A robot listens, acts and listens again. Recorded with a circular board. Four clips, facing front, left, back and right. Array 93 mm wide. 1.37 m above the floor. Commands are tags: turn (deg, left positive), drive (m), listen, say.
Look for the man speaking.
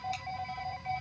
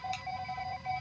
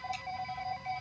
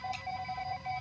<listen/>
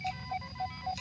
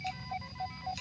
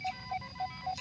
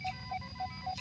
<listen/>
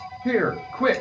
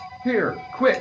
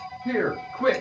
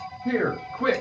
<turn deg="65"/>
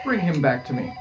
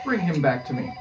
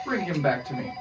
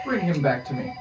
<turn deg="25"/>
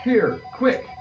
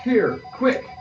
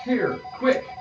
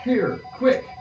<turn deg="15"/>
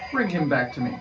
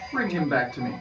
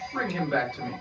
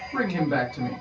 <turn deg="15"/>
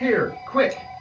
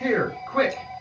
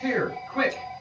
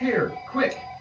<say>Facing the man speaking.</say>